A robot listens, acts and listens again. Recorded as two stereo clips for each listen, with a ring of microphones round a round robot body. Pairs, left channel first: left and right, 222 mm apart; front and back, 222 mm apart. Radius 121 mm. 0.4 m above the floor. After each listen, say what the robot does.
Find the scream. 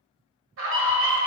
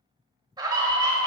Turn 110° right.
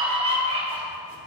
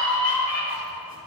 Turn 30° right.
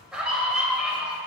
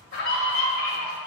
Found it: a scream, straight ahead, 1 to 2 m away.